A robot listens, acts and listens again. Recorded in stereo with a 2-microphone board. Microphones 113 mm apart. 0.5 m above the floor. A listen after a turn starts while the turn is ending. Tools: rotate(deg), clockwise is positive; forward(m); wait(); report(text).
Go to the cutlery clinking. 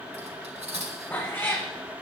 rotate(90)
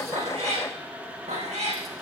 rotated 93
wait()
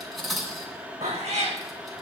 forward(1.0)
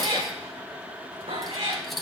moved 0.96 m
forward(1.0)
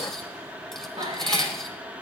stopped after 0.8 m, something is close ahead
report("I am next to the cutlery clinking.")